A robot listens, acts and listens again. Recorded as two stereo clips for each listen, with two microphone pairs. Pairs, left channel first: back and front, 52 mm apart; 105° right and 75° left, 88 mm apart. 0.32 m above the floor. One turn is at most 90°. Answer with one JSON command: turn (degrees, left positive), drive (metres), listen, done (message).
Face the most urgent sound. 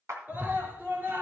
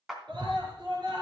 {"turn": 50}
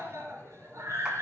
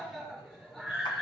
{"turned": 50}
{"turn": -15}
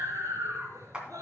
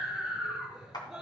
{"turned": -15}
{"done": "Facing the scream."}